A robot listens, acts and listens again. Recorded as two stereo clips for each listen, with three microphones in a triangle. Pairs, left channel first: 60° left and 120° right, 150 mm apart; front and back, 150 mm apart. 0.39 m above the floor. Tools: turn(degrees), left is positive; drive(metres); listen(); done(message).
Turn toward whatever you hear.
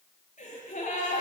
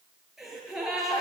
turn(degrees=95)
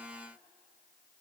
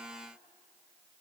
done("Facing where the gasp came from. I can't hear it now.")